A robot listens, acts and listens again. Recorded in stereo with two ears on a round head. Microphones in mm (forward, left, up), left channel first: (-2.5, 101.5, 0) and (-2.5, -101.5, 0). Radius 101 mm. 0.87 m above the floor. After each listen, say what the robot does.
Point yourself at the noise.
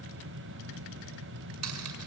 Turn 90° right.
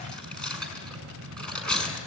Facing the cutlery clinking.